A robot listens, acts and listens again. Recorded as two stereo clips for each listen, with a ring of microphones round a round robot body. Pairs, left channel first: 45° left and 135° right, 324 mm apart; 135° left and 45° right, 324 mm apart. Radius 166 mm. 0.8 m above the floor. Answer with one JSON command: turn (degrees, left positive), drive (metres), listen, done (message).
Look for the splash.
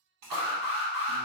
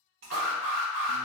{"turn": -100}
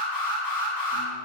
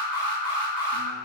{"done": "I heard a splash from this way, but can't make it out now."}